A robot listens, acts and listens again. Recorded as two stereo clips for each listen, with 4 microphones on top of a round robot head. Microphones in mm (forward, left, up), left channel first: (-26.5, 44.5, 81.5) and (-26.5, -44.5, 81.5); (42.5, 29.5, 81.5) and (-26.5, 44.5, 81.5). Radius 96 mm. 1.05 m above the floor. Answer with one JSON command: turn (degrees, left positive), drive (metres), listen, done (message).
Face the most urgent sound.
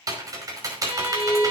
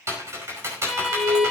{"turn": 175}
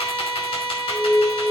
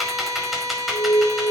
{"turn": 35}
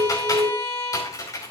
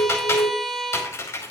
{"turn": -10}
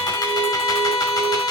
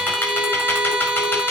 {"listen": true}
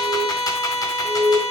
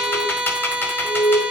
{"done": "Found it: an alarm, straight ahead."}